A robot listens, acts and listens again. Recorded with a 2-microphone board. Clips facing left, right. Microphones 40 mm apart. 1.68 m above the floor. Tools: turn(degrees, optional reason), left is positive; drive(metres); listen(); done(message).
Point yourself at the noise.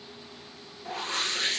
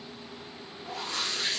turn(degrees=40, reason="The whoosh: about 40° left or 140° left.")
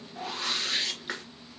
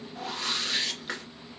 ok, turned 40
done("Facing the whoosh.")